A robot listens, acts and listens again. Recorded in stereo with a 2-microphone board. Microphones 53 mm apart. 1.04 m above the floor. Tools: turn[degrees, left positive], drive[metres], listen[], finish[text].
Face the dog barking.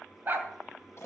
Thought: The dog barking: about 45° right or 135° right.
Action: turn[-45]
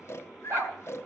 Thought: So it is at 70° right.
Action: turn[-70]
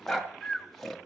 Action: finish[Facing the dog barking, 2 to 4 m away.]